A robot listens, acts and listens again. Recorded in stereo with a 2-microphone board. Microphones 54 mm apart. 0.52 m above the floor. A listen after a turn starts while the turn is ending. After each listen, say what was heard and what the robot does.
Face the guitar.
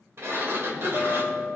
The guitar: about 65° right or 115° right. Turn 65° right.
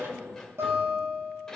So it is at 50° right. Turn 50° right.
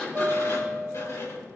The guitar is now 15° left. Turn 15° left.
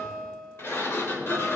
Facing the guitar, 2 to 4 m away.